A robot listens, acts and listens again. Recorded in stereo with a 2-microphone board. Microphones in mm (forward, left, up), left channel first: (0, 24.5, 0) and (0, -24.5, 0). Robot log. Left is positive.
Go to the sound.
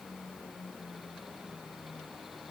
cmd idle
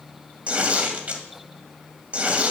note: The tearing paper: about 30° right or 150° right.
cmd yaw -30
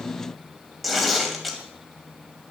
cmd fwd 1.0
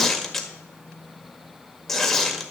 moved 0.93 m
cmd fwd 1.0
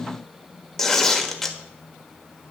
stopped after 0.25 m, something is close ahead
end: Arrived at the tearing paper, straight ahead.